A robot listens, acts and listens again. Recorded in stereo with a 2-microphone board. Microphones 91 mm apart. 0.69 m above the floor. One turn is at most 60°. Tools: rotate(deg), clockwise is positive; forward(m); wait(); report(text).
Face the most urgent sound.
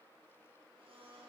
wait()
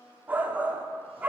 rotate(20)
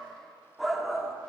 report("Facing the shout, 1 to 2 m away.")